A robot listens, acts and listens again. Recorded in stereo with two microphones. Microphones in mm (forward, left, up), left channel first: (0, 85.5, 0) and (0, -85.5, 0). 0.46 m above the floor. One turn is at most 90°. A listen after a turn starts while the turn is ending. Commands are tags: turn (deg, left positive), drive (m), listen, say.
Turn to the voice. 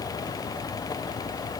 <listen/>
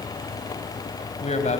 <turn deg="40"/>
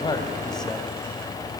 <listen/>
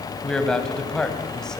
<say>Found it: a man speaking, straight ahead.</say>